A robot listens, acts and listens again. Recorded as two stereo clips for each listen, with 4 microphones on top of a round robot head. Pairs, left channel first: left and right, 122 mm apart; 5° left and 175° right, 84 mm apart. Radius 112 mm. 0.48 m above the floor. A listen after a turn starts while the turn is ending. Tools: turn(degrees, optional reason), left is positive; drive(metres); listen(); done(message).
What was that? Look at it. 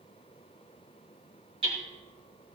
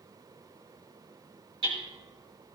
turn(degrees=-140, reason="The hammering: 140° right.")
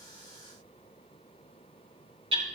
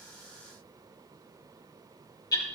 turn(degrees=-50, reason="The hammering is now 50° right.")
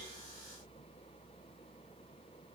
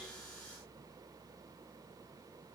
listen()
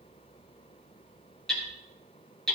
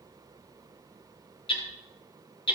done("Found it: hammering, straight ahead, over 4 m away.")